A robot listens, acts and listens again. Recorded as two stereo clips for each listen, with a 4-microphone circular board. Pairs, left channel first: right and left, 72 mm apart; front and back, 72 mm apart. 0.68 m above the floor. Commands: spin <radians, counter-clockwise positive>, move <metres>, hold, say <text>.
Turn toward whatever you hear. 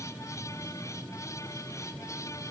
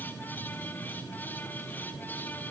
hold
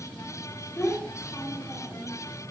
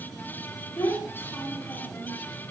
spin -0.61
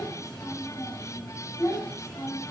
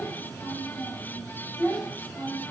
spin -1.40
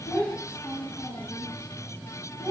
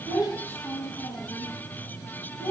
spin -0.35
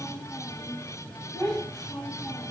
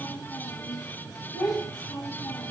say Found it: a child speaking, straight ahead.